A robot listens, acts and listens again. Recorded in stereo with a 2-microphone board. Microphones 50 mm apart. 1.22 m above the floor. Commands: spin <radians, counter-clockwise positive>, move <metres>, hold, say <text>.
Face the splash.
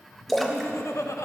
spin 0.52
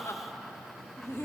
hold
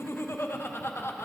say I heard a splash, but can't make it out now. It was about 30° right or 150° left.